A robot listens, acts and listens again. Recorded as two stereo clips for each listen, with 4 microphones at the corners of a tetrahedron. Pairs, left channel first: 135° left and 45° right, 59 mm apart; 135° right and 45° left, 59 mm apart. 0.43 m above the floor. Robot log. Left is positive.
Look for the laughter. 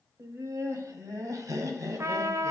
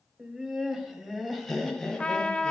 note: The laughter: 50° right.
cmd yaw -50
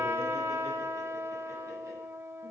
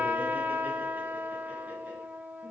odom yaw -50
cmd idle
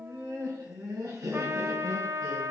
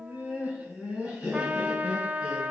note: The laughter is now 25° right.
cmd yaw -25
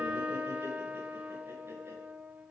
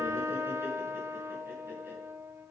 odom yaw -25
cmd idle
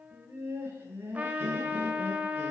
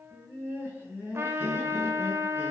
end: Facing the laughter.